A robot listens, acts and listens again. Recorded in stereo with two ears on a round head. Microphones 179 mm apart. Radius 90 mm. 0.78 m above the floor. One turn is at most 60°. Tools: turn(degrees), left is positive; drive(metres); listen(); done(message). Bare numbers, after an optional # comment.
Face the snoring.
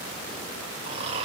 # The snoring: about 30° right or 150° right.
turn(-30)
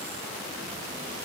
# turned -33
listen()
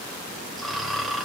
done("Facing the snoring, 2 to 4 m away.")